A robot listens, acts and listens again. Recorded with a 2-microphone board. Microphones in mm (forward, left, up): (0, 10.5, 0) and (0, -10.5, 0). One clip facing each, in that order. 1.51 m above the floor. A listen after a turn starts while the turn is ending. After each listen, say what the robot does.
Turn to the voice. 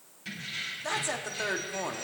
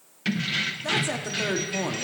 Turn 30° left.
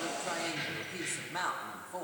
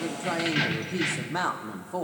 Turn 20° right.
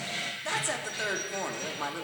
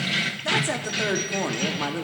Found it: a woman speaking, straight ahead.